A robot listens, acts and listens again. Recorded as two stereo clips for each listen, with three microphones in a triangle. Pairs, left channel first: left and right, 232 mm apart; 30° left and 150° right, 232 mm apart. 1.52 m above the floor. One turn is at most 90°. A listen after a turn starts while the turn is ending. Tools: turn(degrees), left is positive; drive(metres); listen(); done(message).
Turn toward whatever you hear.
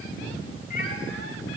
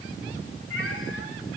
turn(degrees=40)
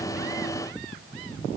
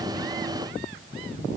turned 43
listen()
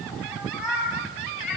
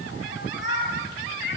done("Found it: a cat meowing, straight ahead, 2 to 4 m away.")